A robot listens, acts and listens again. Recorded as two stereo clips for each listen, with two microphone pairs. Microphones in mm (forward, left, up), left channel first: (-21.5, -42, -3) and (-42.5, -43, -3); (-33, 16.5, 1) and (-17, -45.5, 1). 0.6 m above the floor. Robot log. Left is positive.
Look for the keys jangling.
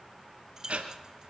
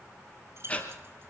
note: The keys jangling: 115° right.
cmd yaw -115
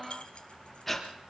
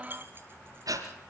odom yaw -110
cmd idle
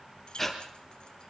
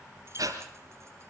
cmd idle
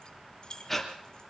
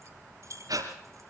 note: The keys jangling is now 45° right.
cmd yaw -45
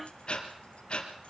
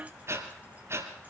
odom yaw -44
cmd idle
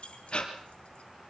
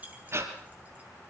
note: The keys jangling is now 15° right.
cmd yaw -15
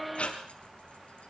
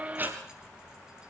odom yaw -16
cmd idle
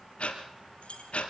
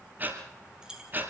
end: Found it: keys jangling, straight ahead.